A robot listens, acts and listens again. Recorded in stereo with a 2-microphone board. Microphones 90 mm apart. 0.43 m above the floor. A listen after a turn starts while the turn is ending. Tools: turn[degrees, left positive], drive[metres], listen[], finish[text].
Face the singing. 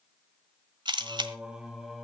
Action: turn[30]
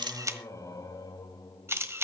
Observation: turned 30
Thought: So it is at 135° left.
Action: turn[135]
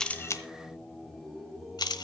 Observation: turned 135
Thought: The singing is now 10° right.
Action: turn[-10]
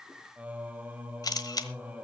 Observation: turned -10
Thought: The singing is now 15° right.
Action: turn[-15]
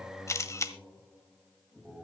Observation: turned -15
Action: finish[Facing the singing, 1 to 2 m away.]